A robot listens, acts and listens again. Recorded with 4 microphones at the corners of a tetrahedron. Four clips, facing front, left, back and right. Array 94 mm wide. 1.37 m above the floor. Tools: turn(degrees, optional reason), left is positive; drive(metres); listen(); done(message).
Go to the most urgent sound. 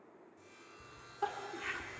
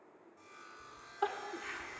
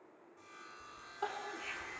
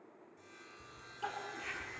turn(degrees=90, reason="The crying: 90° left.")
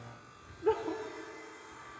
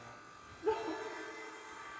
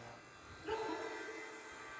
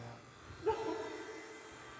turn(degrees=10, reason="The crying is now 10° left.")
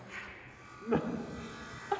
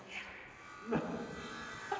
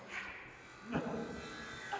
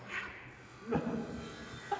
drive(metres=1.0)
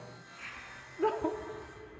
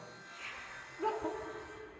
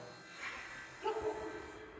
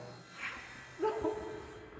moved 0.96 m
turn(degrees=-10, reason="The crying is now 10° right.")
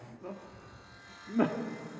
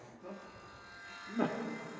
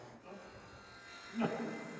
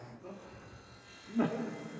drive(metres=1.0)
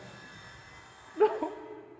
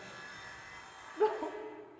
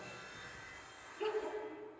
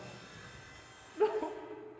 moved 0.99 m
drive(metres=1.0)
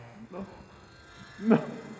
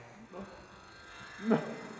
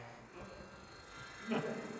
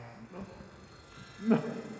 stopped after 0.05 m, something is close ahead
turn(degrees=10, reason="The crying is now 10° left.")
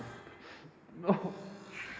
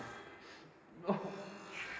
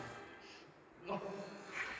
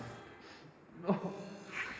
done("I am next to the crying.")